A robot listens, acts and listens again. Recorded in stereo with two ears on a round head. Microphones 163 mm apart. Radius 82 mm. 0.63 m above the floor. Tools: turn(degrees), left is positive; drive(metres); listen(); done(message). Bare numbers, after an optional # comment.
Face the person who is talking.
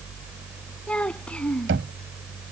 turn(30)
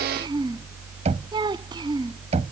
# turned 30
# So it is at 25° right.
turn(-25)
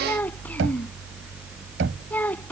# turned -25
# The child speaking is now 10° left.
turn(10)
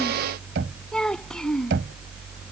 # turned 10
done("Found it: a child speaking, straight ahead.")